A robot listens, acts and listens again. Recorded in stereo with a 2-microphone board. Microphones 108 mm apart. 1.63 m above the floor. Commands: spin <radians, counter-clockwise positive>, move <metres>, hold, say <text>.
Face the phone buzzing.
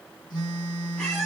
spin 0.79
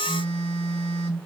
spin 1.48
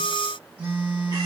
spin -0.26
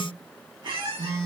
spin -0.17
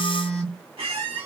say Facing the phone buzzing.